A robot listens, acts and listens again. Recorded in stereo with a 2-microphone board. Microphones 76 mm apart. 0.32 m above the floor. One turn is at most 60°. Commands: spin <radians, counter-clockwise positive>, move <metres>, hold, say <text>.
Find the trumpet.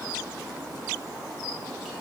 hold
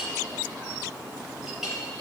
hold
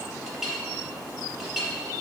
say I can't make out a trumpet to turn to.